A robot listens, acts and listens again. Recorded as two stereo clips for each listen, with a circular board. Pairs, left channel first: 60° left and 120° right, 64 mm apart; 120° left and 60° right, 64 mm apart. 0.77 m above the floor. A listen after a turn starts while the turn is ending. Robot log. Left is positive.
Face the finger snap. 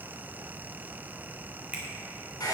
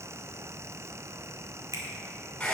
note: The finger snap: 50° right.
cmd yaw -50
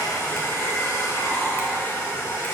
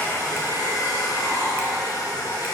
cmd idle
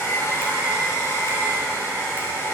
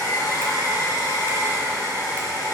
cmd idle
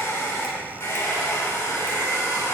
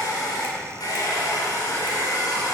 end: I heard a finger snap from this way, but can't make it out now.